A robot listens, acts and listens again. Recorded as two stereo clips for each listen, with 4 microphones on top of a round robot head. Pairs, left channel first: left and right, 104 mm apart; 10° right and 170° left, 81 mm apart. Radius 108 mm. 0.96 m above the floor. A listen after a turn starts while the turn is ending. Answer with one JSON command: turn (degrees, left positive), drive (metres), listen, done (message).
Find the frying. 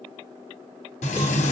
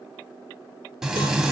{"turn": 85}
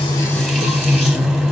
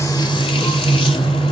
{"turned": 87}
{"done": "Facing the frying, under 1 m away."}